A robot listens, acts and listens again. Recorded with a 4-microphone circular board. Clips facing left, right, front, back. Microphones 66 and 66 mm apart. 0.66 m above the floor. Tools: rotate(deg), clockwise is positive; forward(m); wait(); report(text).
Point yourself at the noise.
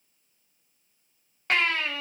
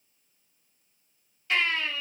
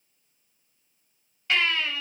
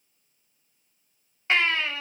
rotate(-120)
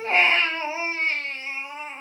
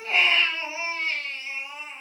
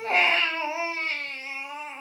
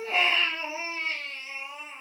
rotate(-35)
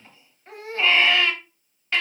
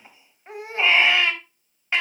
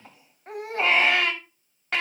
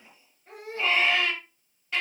rotate(20)
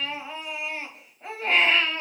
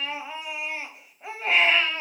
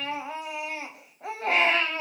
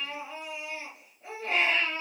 report("Facing the baby crying.")